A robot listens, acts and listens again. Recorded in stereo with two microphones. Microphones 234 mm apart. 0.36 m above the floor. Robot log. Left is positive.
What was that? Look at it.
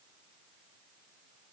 cmd idle
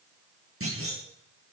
note: The clunk: about 65° right or 115° right.
cmd yaw -65
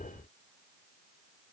cmd idle
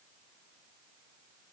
end: I heard a clunk, but can't make it out now. It was about straight ahead or 50° right.